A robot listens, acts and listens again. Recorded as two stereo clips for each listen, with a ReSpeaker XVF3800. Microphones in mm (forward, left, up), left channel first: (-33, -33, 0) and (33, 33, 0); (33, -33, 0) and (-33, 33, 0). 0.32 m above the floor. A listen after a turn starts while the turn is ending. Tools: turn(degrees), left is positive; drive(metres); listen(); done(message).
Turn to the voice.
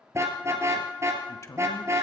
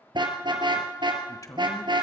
turn(degrees=-85)
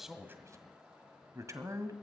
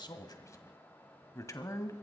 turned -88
done("Facing the man speaking.")